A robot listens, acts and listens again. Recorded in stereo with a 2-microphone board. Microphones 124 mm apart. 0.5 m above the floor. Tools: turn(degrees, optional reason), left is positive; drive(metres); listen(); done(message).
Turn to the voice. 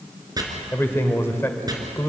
turn(degrees=20, reason="The man speaking: about 20° left or 160° left.")
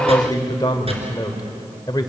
turn(degrees=140, reason="So it is at 140° left.")
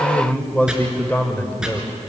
turn(degrees=15, reason="The man speaking is now 15° left.")
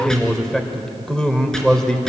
done("Facing the man speaking.")